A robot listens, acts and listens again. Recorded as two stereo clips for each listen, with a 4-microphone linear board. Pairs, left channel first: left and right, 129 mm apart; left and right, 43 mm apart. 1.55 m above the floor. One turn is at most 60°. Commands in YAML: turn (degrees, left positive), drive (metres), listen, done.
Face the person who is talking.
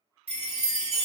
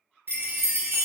listen: true
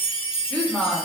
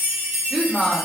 turn: 30
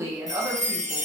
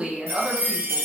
turn: -20
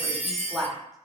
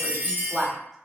done: "Found it: a woman speaking, straight ahead, under 1 m away."